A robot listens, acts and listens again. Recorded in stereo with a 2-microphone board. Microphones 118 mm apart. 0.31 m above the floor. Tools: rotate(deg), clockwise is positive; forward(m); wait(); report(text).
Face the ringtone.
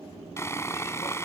wait()
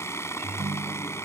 rotate(60)
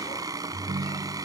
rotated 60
rotate(60)
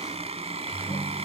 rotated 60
rotate(15)
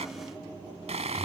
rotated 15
report("Facing the ringtone.")